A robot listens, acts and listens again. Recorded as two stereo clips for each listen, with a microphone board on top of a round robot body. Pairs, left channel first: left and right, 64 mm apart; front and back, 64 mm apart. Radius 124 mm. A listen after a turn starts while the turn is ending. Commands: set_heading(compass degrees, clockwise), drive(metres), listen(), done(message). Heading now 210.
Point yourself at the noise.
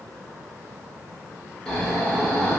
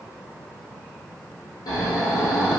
set_heading(200)
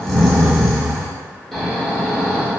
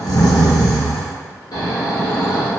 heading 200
done("Facing the snoring.")